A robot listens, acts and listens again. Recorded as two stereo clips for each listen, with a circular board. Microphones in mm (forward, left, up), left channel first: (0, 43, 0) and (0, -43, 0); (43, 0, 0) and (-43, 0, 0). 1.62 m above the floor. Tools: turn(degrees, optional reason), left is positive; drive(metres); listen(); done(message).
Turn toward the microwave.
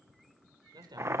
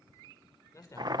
listen()
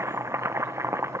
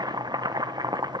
listen()
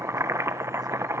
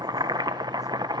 done("I can't make out a microwave, only a man speaking and boiling.")